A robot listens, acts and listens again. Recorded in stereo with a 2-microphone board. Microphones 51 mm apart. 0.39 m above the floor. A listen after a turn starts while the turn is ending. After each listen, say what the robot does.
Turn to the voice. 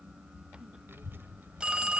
Turn 45° right.
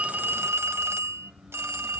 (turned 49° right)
Keep listening.
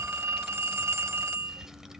Turn 10° right.
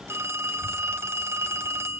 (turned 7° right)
Keep listening.
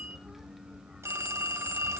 Keep listening.
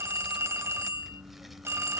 Found it: a child speaking, straight ahead, 1 to 2 m away.